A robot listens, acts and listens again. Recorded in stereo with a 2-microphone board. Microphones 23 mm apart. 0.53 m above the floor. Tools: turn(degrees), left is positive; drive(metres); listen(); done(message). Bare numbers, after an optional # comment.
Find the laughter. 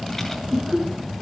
# The laughter: about 25° right or 155° right.
turn(-25)
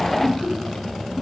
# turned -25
# So it is at 10° left.
turn(10)
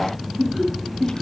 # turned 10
done("Facing the laughter.")